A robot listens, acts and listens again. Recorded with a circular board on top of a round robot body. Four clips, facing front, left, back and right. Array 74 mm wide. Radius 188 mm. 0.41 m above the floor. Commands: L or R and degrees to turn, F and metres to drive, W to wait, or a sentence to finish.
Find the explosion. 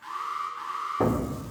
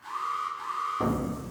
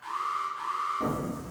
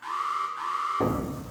R20
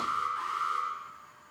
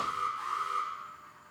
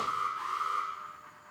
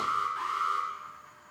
Facing where the explosion came from. I can't hear it now.